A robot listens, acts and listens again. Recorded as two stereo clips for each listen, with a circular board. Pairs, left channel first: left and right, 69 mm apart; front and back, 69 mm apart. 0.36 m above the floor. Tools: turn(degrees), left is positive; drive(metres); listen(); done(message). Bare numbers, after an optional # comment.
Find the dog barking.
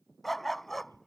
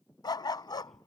done("Found it: a dog barking, straight ahead.")